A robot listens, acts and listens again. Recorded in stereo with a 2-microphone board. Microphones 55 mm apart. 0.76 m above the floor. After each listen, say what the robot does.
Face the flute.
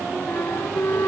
Turn 50° left.
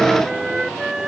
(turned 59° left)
Turn 10° right.
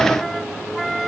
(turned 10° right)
Facing the flute.